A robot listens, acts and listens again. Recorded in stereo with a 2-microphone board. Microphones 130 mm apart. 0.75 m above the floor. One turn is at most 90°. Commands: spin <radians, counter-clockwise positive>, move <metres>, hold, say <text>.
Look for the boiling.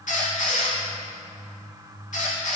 hold
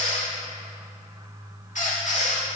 hold
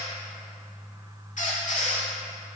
say I can't make out boiling to turn to.